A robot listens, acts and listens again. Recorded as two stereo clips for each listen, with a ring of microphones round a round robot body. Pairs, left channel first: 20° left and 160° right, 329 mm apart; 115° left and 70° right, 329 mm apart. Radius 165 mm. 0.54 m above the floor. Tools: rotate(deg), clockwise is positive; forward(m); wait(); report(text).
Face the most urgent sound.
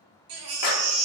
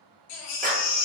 rotate(-155)
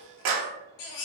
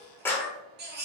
report("Found it: a baby crying, straight ahead.")